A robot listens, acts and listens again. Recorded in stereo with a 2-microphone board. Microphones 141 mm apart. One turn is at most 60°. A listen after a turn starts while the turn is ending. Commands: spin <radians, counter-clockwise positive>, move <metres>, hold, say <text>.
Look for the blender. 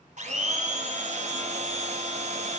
spin -0.96
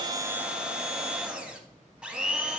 spin -0.17
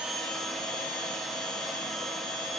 say Found it: a blender, straight ahead.